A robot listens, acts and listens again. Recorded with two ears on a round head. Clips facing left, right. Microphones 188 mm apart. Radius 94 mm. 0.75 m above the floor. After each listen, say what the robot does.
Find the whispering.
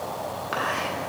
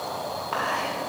Turn 15° left.
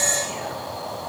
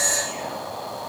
Facing the whispering.